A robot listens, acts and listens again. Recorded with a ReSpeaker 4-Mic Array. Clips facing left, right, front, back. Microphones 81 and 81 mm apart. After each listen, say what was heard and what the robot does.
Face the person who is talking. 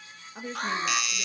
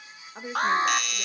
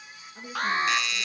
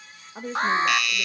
The woman speaking: 160° right. Turn 160° right.
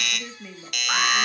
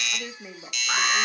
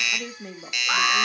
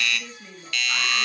The woman speaking is now 30° right. Turn 30° right.
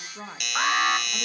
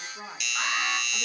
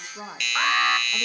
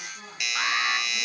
The woman speaking is now 10° left. Turn 10° left.
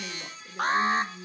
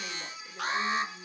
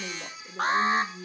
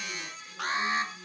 Facing the woman speaking.